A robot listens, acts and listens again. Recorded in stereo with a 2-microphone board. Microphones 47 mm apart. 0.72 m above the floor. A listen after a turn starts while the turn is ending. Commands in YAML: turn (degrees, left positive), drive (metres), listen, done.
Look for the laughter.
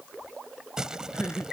turn: 65
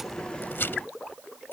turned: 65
listen: true
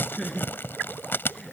done: "Facing the laughter."